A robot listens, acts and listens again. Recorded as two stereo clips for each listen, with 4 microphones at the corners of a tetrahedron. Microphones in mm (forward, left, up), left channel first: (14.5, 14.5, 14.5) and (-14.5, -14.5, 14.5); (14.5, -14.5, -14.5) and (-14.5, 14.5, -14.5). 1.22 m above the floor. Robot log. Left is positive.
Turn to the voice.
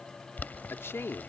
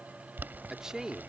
note: The man speaking: 55° left.
cmd yaw +55
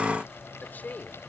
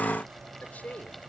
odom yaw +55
end: Facing the man speaking.